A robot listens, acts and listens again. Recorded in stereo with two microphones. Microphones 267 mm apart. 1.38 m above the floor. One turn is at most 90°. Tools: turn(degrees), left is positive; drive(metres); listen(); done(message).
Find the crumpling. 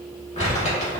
turn(degrees=25)
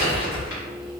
turn(degrees=90)
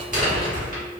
turn(degrees=30)
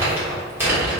turn(degrees=-10)
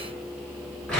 done("Facing the crumpling.")